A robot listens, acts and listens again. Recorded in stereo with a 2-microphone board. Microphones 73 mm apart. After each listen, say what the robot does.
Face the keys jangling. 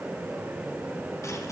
Keep listening.
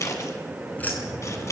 Turn 25° left.
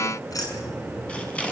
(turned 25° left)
Turn 125° left.
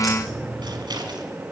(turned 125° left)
Facing the keys jangling, over 4 m away.